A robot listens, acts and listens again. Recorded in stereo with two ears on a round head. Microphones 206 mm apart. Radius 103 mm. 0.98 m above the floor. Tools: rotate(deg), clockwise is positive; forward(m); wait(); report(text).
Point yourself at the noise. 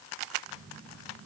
rotate(20)
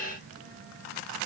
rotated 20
rotate(140)
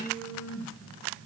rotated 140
rotate(-10)
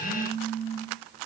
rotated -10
report("Facing the phone buzzing, over 4 m away.")